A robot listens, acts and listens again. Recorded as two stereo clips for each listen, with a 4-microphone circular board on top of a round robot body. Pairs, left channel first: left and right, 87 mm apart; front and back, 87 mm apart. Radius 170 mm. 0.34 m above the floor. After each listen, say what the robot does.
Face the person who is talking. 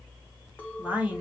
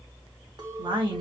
Turn 170° right.
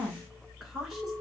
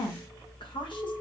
Facing the woman speaking, 2 to 4 m away.